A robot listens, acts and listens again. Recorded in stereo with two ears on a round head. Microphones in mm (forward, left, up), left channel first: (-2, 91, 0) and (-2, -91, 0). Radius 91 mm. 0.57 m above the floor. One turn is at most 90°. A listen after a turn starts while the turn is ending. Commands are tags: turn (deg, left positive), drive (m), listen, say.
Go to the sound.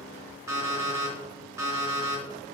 <turn deg="-15"/>
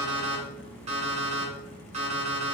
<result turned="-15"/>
<turn deg="-90"/>
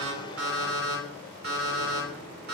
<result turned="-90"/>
<turn deg="-50"/>
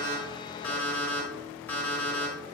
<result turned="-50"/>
<turn deg="10"/>
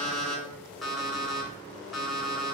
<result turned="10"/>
<drive m="1.0"/>
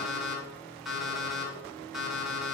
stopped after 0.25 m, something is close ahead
<say>Something is in my way. I am facing the alarm clock but have not reached it.</say>